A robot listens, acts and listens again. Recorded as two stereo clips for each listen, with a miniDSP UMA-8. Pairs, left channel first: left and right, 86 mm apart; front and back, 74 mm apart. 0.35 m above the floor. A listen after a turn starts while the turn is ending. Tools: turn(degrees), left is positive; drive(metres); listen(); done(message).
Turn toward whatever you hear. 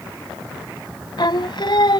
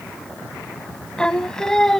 turn(degrees=80)
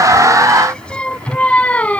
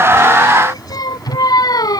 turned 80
turn(degrees=15)
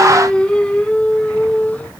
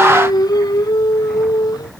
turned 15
turn(degrees=15)
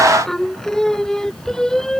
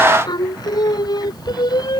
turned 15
done("Facing the singing.")